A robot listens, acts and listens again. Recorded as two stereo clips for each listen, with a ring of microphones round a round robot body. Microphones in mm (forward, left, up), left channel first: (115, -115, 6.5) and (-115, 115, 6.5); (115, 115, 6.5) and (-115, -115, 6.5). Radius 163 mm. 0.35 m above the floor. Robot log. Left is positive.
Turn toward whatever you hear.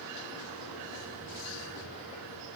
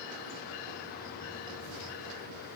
cmd idle
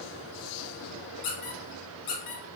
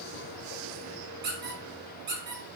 note: The squeak: 75° right.
cmd yaw -75
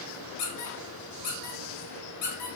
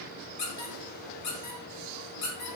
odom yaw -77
end: Facing the squeak.